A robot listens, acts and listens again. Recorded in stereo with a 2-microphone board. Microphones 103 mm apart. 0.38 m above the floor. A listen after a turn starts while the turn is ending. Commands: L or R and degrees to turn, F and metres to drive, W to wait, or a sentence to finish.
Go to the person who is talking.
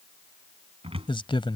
L55
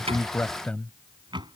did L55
L15
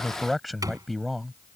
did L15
F1.0
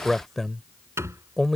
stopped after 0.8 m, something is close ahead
I am next to the man speaking.